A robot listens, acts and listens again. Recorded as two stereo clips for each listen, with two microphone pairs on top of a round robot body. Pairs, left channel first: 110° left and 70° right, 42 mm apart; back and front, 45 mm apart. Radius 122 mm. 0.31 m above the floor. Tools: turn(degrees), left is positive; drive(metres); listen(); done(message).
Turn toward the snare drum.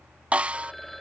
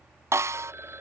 done("Facing the snare drum.")